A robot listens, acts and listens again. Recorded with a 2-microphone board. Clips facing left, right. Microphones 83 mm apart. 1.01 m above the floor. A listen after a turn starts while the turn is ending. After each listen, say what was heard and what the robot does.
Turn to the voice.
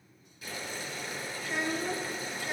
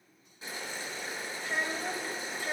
The child speaking: about 40° right or 140° right. Turn 40° right.
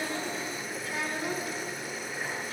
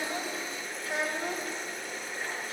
So it is at 95° right. Turn 95° right.
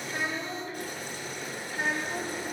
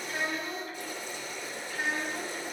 The child speaking is now 35° left. Turn 35° left.
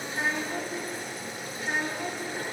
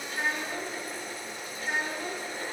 Found it: a child speaking, straight ahead, 2 to 4 m away.